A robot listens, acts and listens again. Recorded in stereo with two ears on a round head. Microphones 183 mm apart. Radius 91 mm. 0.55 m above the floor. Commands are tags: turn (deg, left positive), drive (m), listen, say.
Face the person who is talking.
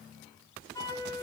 <listen/>
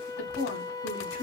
<turn deg="65"/>
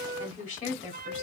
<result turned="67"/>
<turn deg="40"/>
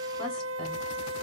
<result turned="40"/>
<listen/>
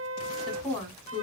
<say>Found it: a woman speaking, straight ahead, 2 to 4 m away.</say>